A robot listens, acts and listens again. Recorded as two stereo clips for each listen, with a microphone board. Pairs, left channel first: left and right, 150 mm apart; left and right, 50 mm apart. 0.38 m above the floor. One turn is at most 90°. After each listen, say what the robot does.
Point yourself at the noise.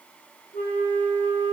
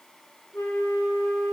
Turn 60° left.
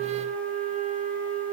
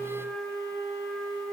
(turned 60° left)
Turn 65° left.
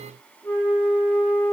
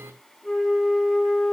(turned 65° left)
Turn 20° left.
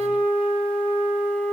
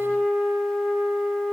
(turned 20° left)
Facing the flute.